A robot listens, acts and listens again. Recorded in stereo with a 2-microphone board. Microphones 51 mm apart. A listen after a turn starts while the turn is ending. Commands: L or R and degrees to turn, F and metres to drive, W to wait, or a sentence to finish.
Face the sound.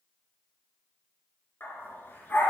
L40
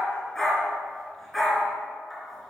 Facing the dog barking.